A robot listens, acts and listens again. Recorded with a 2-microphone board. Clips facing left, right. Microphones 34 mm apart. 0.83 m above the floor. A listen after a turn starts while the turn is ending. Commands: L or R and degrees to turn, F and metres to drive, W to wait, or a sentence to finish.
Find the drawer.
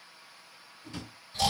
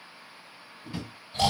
R25
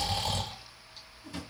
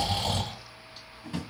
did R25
R130
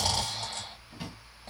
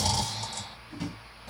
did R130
L15
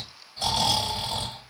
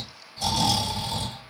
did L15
W
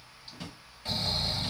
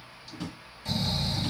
Found it: a drawer, straight ahead, 1 to 2 m away.